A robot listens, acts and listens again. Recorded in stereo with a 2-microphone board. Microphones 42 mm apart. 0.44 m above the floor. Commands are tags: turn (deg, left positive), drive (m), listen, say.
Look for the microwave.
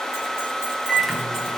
<turn deg="30"/>
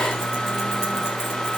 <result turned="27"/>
<turn deg="150"/>
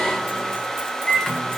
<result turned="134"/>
<turn deg="15"/>
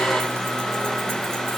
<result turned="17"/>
<listen/>
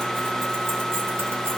<listen/>
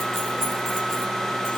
<say>I heard a microwave from this way, but can't make it out now.</say>